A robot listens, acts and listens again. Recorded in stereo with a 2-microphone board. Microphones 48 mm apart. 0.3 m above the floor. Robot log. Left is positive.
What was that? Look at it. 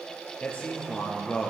note: The man speaking: about 25° left or 155° left.
cmd yaw +25
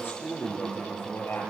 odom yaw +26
note: So it is at 125° left.
cmd yaw +125
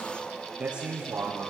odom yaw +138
note: The man speaking is now 20° right.
cmd yaw -20
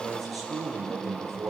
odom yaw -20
end: Found it: a man speaking, straight ahead.